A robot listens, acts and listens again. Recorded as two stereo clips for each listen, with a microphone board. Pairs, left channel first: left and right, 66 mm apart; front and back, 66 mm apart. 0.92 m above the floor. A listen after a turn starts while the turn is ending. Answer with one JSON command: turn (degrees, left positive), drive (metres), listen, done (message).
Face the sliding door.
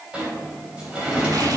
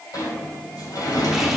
{"turn": -20}
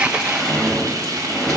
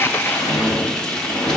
{"done": "Found it: a sliding door, straight ahead."}